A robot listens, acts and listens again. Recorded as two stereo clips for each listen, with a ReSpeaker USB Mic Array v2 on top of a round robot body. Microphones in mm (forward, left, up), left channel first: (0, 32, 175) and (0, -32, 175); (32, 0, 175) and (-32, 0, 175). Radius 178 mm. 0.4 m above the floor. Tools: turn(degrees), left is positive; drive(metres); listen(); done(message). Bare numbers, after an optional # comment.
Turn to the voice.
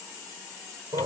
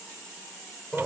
listen()
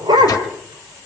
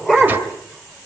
listen()
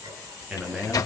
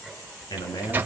# The man speaking: 10° right.
turn(-10)
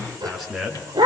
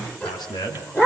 done("Found it: a man speaking, straight ahead.")